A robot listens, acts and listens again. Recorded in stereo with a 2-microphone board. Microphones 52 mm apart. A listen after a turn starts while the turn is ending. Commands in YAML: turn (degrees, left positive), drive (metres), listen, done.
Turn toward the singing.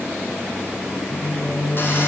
turn: 90
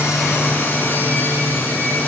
done: "Facing the singing, over 4 m away."